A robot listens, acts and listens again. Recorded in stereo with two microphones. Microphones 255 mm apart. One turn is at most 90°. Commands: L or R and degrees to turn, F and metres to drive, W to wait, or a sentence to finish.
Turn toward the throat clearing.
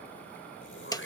L50
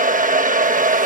W
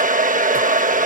W
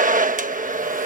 I heard throat clearing, but can't make it out now. It was about straight ahead or 80° left.